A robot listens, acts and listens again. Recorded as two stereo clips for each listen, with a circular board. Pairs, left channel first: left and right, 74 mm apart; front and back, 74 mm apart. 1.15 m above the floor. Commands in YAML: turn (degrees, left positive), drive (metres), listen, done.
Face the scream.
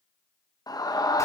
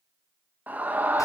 turn: 115
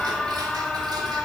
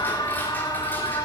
done: "Facing the scream."